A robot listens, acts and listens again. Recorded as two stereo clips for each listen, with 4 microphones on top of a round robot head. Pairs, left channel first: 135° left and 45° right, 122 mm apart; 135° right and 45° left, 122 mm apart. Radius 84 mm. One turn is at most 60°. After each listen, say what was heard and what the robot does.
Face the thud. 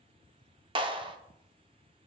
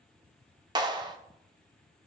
Keep listening.
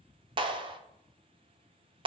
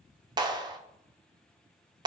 Keep listening.
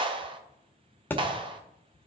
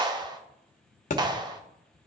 The thud: 150° right. Turn 60° right.
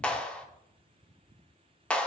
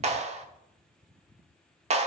Nothing new. It was at 90° right. Turn 60° right.
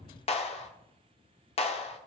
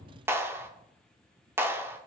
Nothing new. It was at 30° right. Turn 30° right.
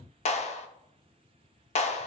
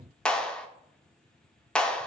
Facing where the thud came from. I can't hear it now.